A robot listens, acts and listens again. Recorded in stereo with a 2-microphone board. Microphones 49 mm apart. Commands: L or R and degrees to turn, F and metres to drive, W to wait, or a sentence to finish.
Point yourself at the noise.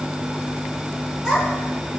R30
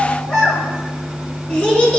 L25
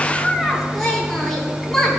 L10
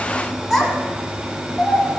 Facing the child speaking, 2 to 4 m away.